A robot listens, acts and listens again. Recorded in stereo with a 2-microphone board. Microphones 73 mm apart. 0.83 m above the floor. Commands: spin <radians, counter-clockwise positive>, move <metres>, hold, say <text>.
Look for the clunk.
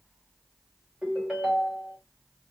hold
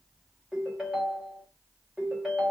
hold
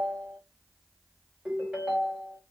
say I can't make out a clunk to turn to.